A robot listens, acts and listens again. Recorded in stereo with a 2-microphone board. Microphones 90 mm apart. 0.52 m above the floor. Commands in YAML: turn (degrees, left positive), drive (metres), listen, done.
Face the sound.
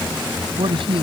turn: -90
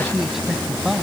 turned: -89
done: "Found it: a man speaking, straight ahead."